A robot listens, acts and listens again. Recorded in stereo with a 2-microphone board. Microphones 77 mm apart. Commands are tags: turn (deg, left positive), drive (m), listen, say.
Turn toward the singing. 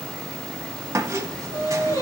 <turn deg="50"/>
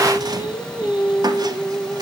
<turn deg="80"/>
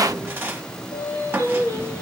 <turn deg="40"/>
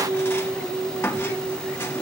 <turn deg="-15"/>
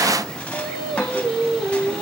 <say>Facing the singing, over 4 m away.</say>